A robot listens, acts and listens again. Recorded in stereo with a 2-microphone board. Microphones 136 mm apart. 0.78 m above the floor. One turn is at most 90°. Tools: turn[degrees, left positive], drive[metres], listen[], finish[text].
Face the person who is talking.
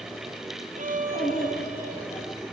Thought: The child speaking: about 50° left or 130° left.
Action: turn[50]
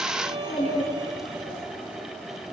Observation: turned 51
Action: finish[Found it: a child speaking, straight ahead.]